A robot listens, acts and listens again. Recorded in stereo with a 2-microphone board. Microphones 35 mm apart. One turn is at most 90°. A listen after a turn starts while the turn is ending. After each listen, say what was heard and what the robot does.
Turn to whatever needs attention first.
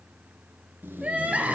The crying: about 45° right or 135° right. Turn 45° right.
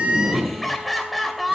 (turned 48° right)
Found it: crying, straight ahead, 2 to 4 m away.